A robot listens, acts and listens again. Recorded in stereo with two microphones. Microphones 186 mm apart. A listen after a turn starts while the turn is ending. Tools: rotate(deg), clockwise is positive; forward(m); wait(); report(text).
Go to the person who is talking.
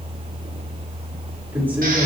rotate(30)
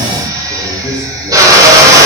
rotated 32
rotate(-20)
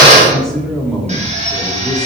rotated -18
forward(1.0)
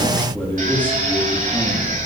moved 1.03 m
rotate(-10)
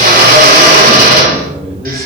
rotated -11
forward(1.0)
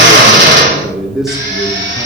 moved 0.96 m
forward(1.0)
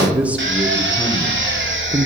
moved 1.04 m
forward(1.0)
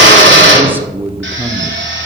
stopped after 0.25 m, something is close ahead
rotate(10)
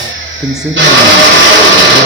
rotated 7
report("Arrived at the man speaking, straight ahead.")